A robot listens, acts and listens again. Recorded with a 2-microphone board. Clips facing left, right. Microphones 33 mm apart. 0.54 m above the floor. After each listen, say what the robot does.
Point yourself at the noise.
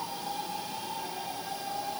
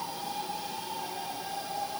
Keep listening.
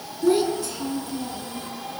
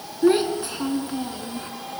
Turn 35° right.
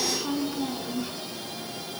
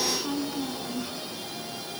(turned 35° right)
Facing the child speaking.